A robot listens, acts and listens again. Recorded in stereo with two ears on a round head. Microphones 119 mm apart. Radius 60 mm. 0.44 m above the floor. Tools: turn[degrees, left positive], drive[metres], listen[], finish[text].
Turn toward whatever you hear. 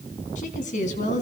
Thought: The woman speaking: about 65° left or 115° left.
Action: turn[65]
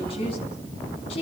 Thought: So it is at 45° left.
Action: turn[45]
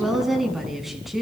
Action: finish[Facing the woman speaking.]